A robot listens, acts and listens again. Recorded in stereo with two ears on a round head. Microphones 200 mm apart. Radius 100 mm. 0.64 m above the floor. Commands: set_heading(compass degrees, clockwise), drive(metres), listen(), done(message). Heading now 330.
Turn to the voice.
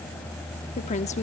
set_heading(300)
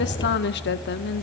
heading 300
set_heading(185)
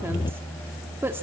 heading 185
set_heading(195)
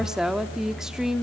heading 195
done("Found it: a woman speaking, straight ahead, under 1 m away.")